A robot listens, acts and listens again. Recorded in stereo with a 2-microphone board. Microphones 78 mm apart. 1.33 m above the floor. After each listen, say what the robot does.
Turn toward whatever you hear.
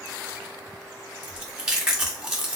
Turn 30° right.
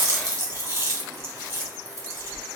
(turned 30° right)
Turn 145° right.
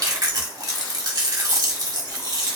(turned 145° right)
Turn 60° right.
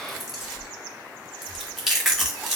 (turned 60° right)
Found it: chewing, straight ahead.